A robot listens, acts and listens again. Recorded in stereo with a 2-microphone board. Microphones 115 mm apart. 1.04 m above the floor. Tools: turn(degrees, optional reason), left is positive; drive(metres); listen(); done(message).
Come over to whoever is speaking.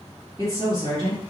turn(degrees=-45, reason="The woman speaking: about 45° right or 135° right.")
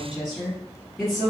drive(metres=1.0)
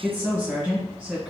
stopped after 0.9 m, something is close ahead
turn(degrees=-15, reason="The woman speaking is now 15° right.")
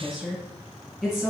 done("Arrived at the woman speaking, straight ahead.")